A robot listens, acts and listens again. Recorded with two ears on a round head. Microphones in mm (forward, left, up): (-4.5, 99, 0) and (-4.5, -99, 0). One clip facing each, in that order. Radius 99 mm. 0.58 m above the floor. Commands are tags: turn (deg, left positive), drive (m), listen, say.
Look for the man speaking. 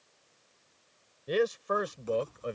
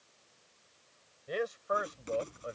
<turn deg="60"/>
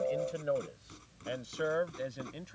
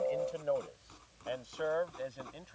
<turn deg="30"/>
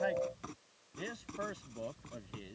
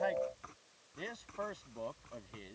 <turn deg="10"/>
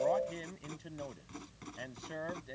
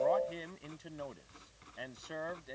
<say>Found it: a man speaking, straight ahead.</say>